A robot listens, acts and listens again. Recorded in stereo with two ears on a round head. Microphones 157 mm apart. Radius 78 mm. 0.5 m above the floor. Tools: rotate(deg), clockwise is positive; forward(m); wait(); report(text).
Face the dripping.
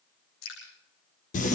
rotate(-90)
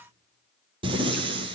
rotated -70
rotate(-20)
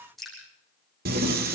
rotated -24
report("Found it: dripping, straight ahead.")